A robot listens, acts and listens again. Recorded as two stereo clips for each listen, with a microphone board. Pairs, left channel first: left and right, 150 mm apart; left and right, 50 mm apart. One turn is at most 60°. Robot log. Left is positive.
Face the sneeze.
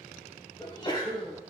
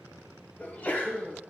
note: The sneeze: about 35° left or 145° left.
cmd yaw +35
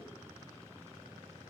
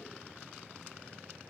cmd idle
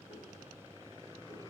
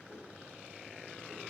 end: I heard a sneeze, but can't make it out now. It was about straight ahead or 110° left.